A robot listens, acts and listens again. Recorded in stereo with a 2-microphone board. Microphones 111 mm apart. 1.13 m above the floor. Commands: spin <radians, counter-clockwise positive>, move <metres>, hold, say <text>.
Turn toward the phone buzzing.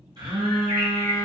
spin -0.70
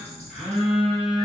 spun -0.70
say Facing the phone buzzing, 1 to 2 m away.